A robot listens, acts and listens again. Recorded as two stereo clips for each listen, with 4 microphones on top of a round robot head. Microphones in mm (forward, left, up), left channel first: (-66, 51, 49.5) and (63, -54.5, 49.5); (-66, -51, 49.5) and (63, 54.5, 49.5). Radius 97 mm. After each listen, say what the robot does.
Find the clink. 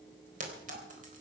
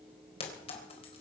Turn 85° right.
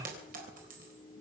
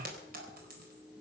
Facing the clink, 2 to 4 m away.